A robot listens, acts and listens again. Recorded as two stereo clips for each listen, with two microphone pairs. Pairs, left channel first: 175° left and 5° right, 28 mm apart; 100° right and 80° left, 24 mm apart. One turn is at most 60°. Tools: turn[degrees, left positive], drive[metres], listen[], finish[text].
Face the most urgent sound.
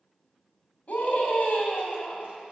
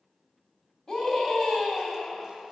Thought: The scream: 155° right.
Action: turn[-60]
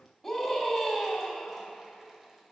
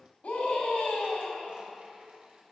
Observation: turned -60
Thought: The scream is now 95° right.
Action: turn[-60]
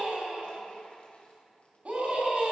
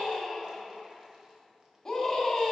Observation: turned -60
Thought: The scream is now 30° right.
Action: turn[-30]
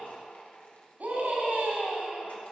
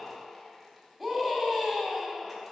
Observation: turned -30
Action: finish[Found it: a scream, straight ahead, 2 to 4 m away.]